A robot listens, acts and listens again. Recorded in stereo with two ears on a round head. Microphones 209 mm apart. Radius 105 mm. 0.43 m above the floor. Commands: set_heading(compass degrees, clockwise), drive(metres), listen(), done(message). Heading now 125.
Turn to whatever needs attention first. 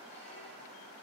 listen()
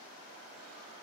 listen()
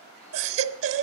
set_heading(185)
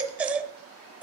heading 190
done("Facing the baby crying.")